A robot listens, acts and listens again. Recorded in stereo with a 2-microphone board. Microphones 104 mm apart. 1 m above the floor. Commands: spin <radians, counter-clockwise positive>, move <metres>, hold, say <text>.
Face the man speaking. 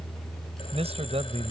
spin -1.57
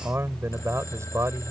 spin -0.52
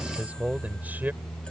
spin -0.26
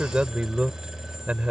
spin -0.17
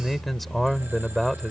say Found it: a man speaking, straight ahead.